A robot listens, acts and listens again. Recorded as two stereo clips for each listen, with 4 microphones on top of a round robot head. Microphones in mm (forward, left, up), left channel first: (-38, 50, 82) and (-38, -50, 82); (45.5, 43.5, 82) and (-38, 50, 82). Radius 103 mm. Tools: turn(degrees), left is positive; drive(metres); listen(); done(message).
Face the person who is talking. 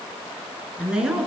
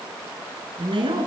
turn(degrees=-170)
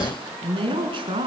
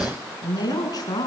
turn(degrees=-50)
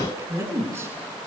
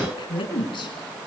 turn(degrees=-25)
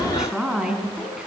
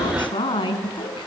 done("Facing the woman speaking.")